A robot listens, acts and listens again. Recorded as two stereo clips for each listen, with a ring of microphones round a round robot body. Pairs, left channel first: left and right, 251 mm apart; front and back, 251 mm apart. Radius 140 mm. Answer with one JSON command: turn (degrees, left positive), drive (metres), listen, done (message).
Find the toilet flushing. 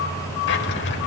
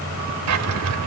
{"listen": true}
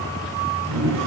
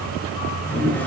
{"turn": -85}
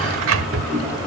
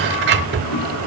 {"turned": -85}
{"done": "Found it: a toilet flushing, straight ahead."}